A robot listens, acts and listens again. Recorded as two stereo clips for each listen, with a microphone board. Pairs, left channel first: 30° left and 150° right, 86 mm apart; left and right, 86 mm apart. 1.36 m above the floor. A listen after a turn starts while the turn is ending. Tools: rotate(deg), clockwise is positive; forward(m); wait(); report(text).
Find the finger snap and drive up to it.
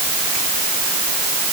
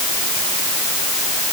wait()
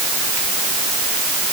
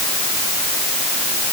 wait()
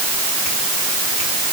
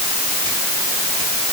report("I can't make out a finger snap to turn to.")